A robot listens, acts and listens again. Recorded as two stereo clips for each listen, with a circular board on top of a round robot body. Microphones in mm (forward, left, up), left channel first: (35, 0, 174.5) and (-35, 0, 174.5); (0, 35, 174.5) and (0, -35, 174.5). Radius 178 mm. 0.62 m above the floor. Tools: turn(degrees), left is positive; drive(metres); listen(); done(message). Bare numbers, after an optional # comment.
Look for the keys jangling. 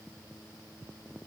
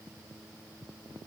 listen()
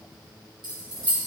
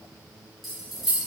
# The keys jangling: 175° right.
turn(-175)
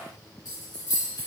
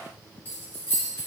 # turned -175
# The keys jangling is now 35° left.
turn(35)
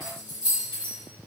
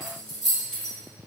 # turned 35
# The keys jangling is now 10° left.
turn(10)
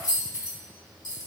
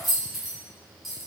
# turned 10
done("Facing the keys jangling.")